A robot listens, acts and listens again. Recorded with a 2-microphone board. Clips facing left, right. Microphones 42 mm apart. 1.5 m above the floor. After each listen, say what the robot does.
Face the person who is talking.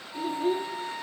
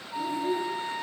Turn 50° left.
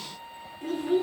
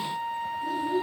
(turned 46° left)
Turn 80° left.
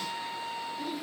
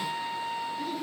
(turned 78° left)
Found it: a child speaking, straight ahead.